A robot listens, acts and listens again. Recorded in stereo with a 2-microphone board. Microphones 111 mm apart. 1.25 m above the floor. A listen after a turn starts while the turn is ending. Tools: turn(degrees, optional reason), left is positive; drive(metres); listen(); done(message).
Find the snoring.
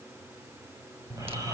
turn(degrees=-30, reason="The snoring: about 30° right or 150° right.")
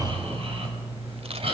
turn(degrees=-120, reason="So it is at 120° right.")
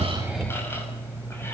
turn(degrees=20, reason="The snoring is now 20° left.")
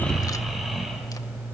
done("Facing the snoring.")